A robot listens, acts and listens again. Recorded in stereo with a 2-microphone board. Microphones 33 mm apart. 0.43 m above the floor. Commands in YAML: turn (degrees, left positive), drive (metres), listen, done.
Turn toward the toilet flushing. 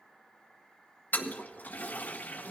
turn: 60
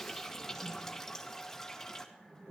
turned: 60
turn: 10
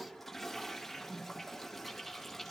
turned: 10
done: "Found it: a toilet flushing, straight ahead."